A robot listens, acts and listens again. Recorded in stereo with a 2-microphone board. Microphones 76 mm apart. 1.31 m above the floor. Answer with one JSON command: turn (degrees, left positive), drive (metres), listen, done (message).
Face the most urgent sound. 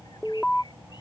{"turn": 30}
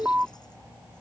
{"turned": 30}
{"turn": -20}
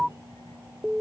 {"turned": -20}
{"done": "Facing the alarm."}